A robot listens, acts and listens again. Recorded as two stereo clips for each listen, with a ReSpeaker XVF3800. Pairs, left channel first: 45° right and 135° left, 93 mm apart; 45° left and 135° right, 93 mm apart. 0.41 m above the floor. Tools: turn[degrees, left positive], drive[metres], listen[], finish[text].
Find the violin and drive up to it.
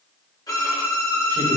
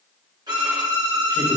Thought: The violin: 95° right.
Action: turn[-95]
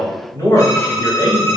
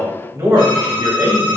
Action: drive[1.0]
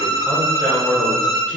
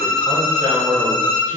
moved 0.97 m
Action: drive[1.0]
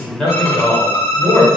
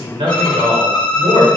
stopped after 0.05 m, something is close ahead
Action: finish[I am next to the violin.]